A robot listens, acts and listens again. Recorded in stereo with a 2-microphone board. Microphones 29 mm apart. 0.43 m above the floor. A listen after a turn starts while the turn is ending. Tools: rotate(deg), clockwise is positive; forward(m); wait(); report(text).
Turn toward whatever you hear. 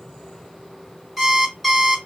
rotate(30)
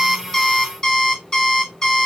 rotate(-25)
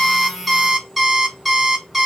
rotate(10)
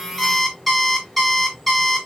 report("Found it: an alarm clock, straight ahead.")